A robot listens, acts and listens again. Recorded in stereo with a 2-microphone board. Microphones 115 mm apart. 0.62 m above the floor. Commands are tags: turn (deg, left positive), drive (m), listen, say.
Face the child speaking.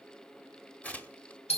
<listen/>
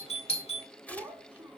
<turn deg="-30"/>
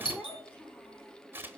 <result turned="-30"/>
<turn deg="15"/>
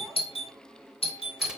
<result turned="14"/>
<listen/>
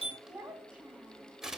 <turn deg="-10"/>
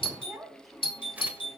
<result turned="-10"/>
<say>Found it: a child speaking, straight ahead.</say>